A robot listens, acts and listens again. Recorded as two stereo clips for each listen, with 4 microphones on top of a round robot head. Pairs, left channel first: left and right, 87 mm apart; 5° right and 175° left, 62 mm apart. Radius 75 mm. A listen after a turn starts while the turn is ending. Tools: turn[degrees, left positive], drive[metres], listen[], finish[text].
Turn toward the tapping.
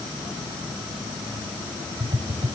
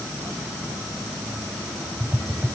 Thought: The tapping: 105° right.
Action: turn[-105]
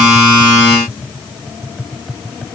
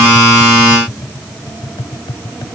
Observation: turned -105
Action: finish[Found it: tapping, straight ahead.]